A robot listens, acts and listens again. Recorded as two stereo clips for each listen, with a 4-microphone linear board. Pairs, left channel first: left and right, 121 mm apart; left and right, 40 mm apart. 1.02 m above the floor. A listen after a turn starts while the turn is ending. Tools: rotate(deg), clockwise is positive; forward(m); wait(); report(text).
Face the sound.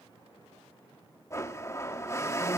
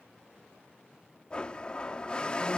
rotate(-25)
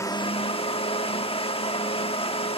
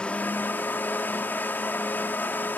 rotate(-130)
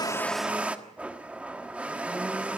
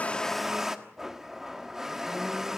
rotate(10)
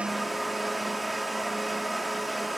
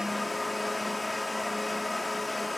report("Found it: a blender, straight ahead, 1 to 2 m away.")